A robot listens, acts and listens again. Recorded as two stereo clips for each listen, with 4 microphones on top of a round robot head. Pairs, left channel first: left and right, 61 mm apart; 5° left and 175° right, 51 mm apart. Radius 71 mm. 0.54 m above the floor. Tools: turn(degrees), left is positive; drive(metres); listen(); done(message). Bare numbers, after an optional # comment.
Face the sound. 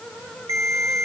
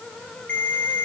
# The ringtone: 60° right.
turn(-60)
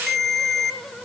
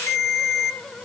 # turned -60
done("Facing the ringtone, 1 to 2 m away.")